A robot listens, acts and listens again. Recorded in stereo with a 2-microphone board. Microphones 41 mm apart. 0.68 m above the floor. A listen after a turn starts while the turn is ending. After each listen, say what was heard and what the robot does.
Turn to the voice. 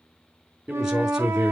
Turn 30° right.
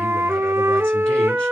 Keep listening.
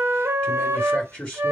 So it is at 20° left. Turn 20° left.
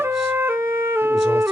Keep listening.
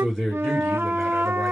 Found it: a man speaking, straight ahead.